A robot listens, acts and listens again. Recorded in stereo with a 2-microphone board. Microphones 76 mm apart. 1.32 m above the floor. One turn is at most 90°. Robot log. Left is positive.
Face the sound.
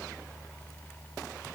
cmd idle
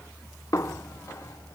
note: The snare drum: about 45° left or 135° left.
cmd yaw +45
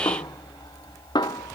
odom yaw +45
note: So it is at 90° left.
cmd yaw +90
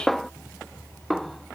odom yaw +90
end: Facing the snare drum.